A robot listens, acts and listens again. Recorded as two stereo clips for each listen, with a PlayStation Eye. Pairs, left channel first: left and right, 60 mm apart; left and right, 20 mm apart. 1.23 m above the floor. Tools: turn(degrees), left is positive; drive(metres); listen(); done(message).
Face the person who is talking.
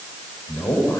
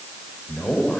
turn(degrees=90)
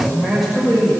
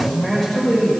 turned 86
done("Found it: a man speaking, straight ahead.")